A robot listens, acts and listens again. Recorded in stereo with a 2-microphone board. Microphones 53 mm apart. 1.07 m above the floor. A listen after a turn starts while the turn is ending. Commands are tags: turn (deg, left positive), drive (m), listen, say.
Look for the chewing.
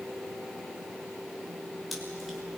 <turn deg="30"/>
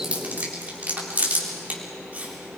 <turn deg="-30"/>
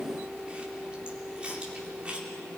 <listen/>
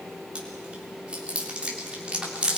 <turn deg="-20"/>
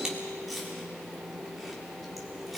<listen/>
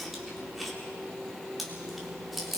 <say>Found it: chewing, straight ahead.</say>